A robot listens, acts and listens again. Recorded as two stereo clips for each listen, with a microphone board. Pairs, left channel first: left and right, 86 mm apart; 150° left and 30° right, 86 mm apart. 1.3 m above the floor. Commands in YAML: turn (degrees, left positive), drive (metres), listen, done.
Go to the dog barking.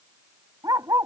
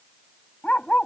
turn: -135
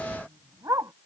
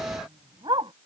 turn: -40
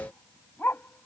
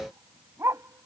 turn: 25
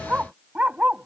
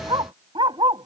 turn: -15
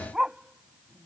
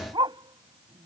drive: 1.0
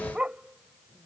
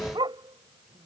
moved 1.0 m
turn: -10
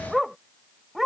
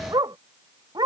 drive: 1.0
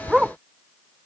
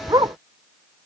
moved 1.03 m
drive: 1.0
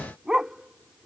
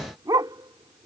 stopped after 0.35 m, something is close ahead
turn: -10
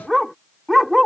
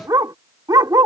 done: "Arrived at the dog barking, straight ahead."